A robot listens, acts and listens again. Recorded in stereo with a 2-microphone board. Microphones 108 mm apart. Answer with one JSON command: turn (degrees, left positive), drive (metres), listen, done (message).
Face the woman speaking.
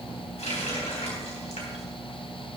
{"listen": true}
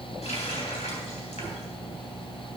{"listen": true}
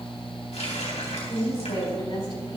{"turn": 55}
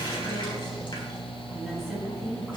{"listen": true}
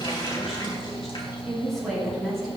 {"done": "Facing the woman speaking, over 4 m away."}